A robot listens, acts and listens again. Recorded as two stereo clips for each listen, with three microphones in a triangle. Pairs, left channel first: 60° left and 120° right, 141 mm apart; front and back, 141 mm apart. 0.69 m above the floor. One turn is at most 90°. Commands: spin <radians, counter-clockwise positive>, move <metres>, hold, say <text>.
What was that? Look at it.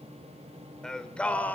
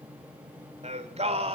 spin 1.57
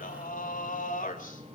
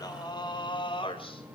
spin 0.87
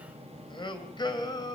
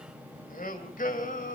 say Found it: singing, straight ahead.